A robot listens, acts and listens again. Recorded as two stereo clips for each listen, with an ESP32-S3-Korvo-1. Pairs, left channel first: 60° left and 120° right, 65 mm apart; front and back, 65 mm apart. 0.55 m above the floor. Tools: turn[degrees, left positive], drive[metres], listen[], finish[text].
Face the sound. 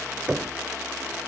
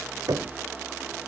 Thought: The knocking: 165° left.
Action: turn[165]
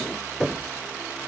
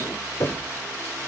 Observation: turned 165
Thought: The knocking is now 25° right.
Action: turn[-25]
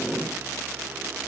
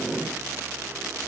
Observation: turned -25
Action: listen[]
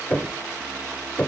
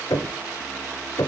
Action: finish[Found it: knocking, straight ahead, 1 to 2 m away.]